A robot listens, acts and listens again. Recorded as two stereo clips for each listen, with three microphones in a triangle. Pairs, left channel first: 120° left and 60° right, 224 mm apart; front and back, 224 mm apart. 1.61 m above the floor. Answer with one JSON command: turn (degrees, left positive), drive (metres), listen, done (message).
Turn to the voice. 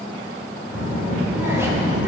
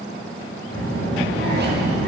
{"turn": 20}
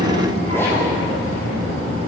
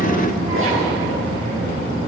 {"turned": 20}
{"done": "Facing the child speaking, 2 to 4 m away."}